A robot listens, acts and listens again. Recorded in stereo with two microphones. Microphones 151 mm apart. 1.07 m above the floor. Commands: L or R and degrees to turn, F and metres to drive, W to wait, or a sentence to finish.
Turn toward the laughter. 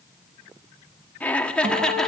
L30
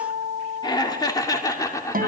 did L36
L160
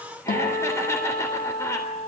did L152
L20
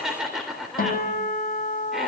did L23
Facing the laughter, 2 to 4 m away.